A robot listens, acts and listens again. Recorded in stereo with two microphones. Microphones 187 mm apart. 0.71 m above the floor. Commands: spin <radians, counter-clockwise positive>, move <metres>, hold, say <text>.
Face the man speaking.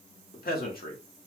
spin 0.87
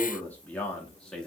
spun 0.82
say Found it: a man speaking, straight ahead.